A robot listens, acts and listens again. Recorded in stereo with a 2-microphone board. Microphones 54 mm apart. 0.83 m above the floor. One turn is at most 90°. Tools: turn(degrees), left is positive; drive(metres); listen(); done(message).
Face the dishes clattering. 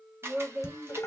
turn(degrees=60)
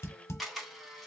turn(degrees=60)
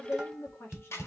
turn(degrees=-15)
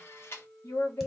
listen()
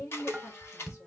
done("Facing the dishes clattering.")